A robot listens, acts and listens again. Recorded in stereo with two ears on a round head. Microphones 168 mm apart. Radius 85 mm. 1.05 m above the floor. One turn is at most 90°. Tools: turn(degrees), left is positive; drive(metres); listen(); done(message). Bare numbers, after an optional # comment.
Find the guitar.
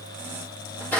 listen()
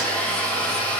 listen()
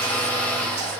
done("I can't make out a guitar to turn to.")